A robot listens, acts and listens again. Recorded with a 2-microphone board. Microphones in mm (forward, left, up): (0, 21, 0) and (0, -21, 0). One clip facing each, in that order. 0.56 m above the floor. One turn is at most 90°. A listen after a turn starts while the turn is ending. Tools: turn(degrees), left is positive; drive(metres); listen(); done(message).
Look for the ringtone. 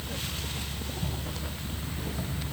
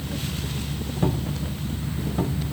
listen()
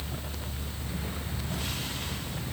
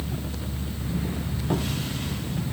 listen()
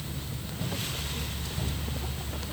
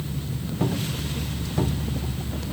done("I can't make out a ringtone.")